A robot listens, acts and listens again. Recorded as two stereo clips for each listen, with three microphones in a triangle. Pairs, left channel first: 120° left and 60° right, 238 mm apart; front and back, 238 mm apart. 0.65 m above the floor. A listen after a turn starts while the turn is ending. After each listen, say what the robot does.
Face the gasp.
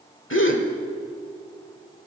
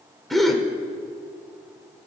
Turn 90° left.
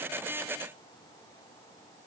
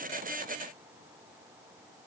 Facing where the gasp came from. I can't hear it now.